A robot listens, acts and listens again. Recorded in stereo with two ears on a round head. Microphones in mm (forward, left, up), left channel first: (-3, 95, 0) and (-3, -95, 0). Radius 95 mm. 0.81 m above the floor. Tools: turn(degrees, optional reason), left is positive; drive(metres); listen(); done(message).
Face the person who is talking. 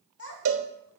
turn(degrees=70, reason="The child speaking: about 70° left or 110° left.")
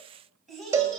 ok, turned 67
done("Facing the child speaking, 2 to 4 m away.")